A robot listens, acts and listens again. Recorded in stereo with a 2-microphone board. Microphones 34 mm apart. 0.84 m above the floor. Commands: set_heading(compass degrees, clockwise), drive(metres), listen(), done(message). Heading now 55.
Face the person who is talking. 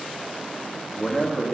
set_heading(25)
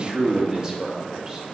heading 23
set_heading(43)
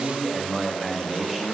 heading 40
done("Facing the man speaking, 1 to 2 m away.")